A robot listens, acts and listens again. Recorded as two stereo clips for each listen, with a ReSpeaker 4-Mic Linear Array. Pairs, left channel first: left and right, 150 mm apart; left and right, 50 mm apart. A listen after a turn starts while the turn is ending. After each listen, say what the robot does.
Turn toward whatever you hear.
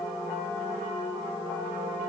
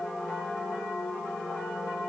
Keep listening.
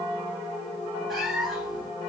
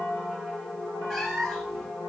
Turn 30° left.
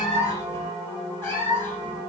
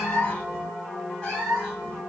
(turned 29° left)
Turn 165° left.
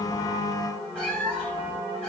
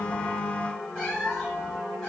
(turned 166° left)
Found it: a cat meowing, straight ahead.